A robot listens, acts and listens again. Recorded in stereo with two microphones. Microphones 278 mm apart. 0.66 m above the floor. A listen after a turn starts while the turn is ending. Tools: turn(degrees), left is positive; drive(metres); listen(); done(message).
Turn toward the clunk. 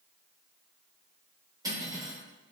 listen()
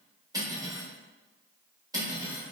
listen()
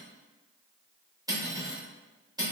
done("I can't make out a clunk, only cutlery clinking.")